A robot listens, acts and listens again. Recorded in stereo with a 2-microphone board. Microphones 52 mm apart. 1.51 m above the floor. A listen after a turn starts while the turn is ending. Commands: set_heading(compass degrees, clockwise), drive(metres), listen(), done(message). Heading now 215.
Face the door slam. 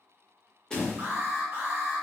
set_heading(185)
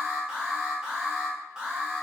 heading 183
listen()
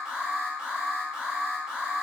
done("I heard a door slam, but can't make it out now. It was about 15° right or 135° left.")